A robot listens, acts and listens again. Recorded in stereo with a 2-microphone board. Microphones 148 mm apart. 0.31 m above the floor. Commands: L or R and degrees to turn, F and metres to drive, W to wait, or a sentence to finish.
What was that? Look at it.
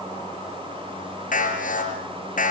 L65
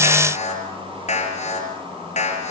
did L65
L50
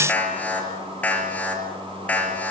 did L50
L10
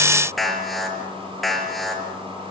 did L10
Found it: an alarm, straight ahead, over 4 m away.